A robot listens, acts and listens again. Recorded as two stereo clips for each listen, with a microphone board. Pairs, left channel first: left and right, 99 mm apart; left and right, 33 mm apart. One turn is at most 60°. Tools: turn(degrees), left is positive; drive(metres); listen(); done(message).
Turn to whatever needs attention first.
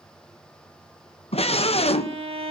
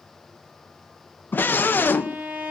turn(degrees=60)
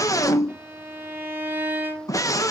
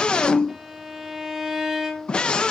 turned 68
turn(degrees=35)
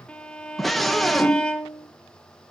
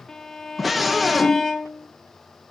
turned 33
done("Found it: a scream, straight ahead.")